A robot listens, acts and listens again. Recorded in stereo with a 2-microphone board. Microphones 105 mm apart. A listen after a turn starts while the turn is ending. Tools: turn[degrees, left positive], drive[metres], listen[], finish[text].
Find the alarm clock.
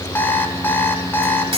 Thought: The alarm clock: about 20° left or 160° left.
Action: turn[20]
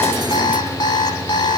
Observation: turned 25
Thought: So it is at 135° left.
Action: turn[135]
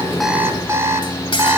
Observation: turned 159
Thought: The alarm clock is now 25° right.
Action: turn[-25]
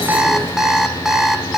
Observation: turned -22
Action: finish[Found it: an alarm clock, straight ahead, 1 to 2 m away.]